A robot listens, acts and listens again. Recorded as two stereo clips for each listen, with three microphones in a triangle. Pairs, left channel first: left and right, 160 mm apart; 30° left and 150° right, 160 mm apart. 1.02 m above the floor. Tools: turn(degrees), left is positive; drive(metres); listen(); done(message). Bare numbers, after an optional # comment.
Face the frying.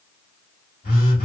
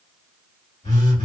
listen()
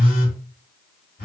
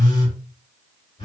listen()
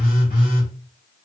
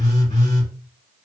done("I can't make out frying, only a phone buzzing.")